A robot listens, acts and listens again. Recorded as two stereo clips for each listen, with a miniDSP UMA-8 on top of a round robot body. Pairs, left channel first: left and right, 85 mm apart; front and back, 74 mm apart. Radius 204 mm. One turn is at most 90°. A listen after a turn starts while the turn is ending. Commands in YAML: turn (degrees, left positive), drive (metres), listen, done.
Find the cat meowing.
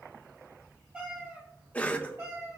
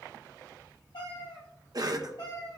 turn: -35
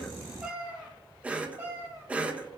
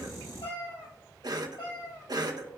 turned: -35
turn: -30
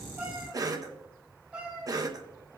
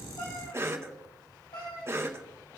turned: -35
turn: -15
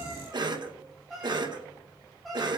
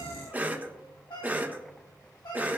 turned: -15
done: "Facing the cat meowing, 2 to 4 m away."